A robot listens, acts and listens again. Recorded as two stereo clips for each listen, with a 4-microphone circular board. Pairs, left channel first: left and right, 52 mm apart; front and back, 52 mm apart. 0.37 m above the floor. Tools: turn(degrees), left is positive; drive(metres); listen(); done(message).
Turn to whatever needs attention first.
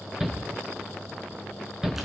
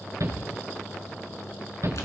turn(degrees=-170)
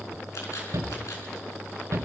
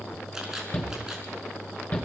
turn(degrees=-60)
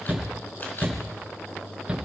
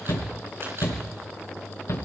turn(degrees=-15)
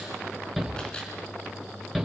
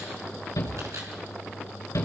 done("Found it: a shout, straight ahead.")